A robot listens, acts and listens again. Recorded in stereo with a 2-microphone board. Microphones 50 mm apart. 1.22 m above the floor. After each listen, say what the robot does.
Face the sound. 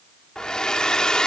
Turn 15° left.
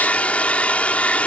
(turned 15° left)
Turn 150° left.
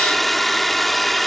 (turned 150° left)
Found it: a hair dryer, straight ahead.